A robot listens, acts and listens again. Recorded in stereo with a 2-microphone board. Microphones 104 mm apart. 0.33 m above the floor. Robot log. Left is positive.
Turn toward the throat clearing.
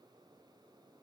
cmd idle
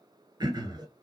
note: The throat clearing: about 45° right or 135° right.
cmd yaw -45
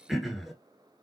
end: Facing the throat clearing, under 1 m away.